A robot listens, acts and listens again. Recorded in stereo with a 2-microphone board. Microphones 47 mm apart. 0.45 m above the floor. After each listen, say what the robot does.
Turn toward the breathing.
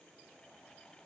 Keep listening.
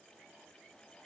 Keep listening.
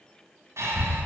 Turn 90° right.
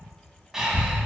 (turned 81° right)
Turn 10° right.
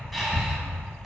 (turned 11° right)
Found it: breathing, straight ahead, 1 to 2 m away.